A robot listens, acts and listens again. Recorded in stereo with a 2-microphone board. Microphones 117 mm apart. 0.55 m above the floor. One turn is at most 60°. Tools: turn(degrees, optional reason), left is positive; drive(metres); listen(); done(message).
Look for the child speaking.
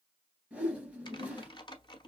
listen()
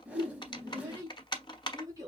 turn(degrees=-30, reason="The child speaking: about 30° right or 150° right.")
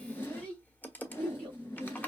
done("Facing the child speaking, 2 to 4 m away.")